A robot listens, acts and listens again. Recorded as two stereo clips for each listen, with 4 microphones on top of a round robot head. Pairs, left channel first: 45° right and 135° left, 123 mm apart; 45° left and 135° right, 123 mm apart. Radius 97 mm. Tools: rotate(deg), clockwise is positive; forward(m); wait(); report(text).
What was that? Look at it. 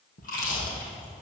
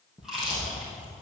rotate(45)
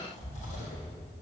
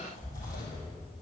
rotate(20)
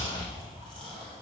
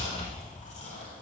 report("Facing the chewing.")